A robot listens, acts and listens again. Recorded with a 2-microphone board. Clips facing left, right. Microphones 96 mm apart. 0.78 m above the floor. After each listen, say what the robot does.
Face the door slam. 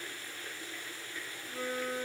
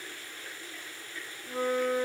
Keep listening.
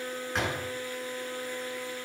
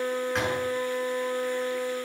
Turn 30° left.
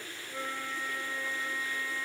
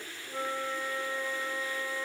Keep listening.
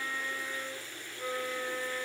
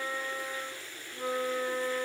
I heard a door slam, but can't make it out now. It was about 30° right or 150° left.